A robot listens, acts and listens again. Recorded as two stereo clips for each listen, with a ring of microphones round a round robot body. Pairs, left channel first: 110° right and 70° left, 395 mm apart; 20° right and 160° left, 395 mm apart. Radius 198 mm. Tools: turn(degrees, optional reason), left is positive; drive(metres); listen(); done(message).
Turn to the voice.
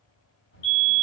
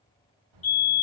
turn(degrees=-175, reason="The child speaking: 175° right.")
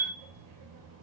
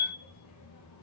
turn(degrees=25, reason="The child speaking is now 25° left.")
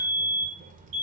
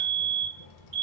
done("Found it: a child speaking, straight ahead.")